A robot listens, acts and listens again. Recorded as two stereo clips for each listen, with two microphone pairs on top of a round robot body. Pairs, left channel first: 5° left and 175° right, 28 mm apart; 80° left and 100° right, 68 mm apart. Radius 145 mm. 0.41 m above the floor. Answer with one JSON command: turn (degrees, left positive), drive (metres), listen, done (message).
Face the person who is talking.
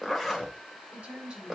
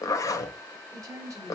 {"turn": -140}
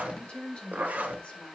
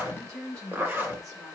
{"turn": -45}
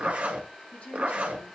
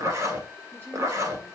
{"listen": true}
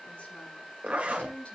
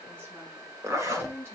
{"turn": -35}
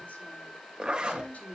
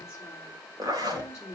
{"turn": -10}
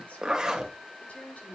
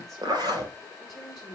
{"done": "Facing the woman speaking, over 4 m away."}